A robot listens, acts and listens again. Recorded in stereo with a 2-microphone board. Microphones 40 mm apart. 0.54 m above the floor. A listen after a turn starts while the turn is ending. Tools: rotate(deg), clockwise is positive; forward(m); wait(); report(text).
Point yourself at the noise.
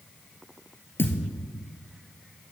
rotate(-70)
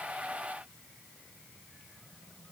wait()
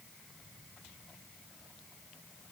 report("I heard a thud, but can't make it out now. It was about straight ahead or 40° left.")